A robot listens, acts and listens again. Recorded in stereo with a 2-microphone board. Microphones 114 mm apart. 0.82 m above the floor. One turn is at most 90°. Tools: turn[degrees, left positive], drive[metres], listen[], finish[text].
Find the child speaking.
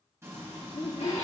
Thought: The child speaking: about 40° left or 140° left.
Action: turn[40]
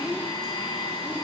Action: listen[]
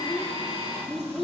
Action: finish[Found it: a child speaking, straight ahead.]